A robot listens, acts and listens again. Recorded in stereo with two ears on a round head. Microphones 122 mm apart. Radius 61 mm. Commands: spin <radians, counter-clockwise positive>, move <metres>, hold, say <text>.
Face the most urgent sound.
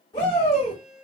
spin 0.52
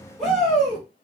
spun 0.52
say Found it: a shout, straight ahead, 1 to 2 m away.